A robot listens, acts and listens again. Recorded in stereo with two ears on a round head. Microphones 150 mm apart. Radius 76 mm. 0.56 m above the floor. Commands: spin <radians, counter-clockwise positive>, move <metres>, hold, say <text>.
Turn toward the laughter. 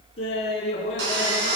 spin 0.61
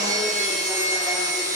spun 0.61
hold
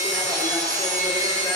hold
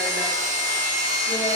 say I heard laughter, but can't make it out now. It was about straight ahead or 110° left.